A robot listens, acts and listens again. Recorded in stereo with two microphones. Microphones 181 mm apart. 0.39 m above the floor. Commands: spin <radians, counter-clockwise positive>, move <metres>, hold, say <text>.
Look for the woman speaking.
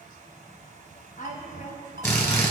spin 0.87
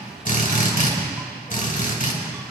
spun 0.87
hold
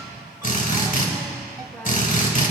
hold
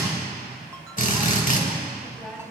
say Found it: a woman speaking, straight ahead.